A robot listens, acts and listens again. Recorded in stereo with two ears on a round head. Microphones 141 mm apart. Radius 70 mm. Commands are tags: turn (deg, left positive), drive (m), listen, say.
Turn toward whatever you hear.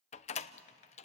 <turn deg="45"/>
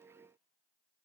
<listen/>
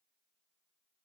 <say>I heard a door slam, but can't make it out now. It was about straight ahead or 90° left.</say>